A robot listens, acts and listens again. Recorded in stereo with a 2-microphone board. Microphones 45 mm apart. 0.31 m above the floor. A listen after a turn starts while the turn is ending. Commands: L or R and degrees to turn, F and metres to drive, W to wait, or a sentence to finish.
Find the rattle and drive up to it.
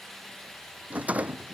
R30
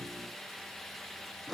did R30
F1.0
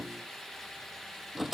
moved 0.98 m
F1.0
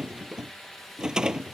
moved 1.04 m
R15
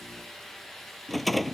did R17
F1.0
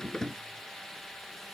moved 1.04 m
L15
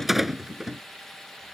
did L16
F1.0
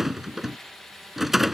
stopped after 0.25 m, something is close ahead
Arrived at the rattle, straight ahead.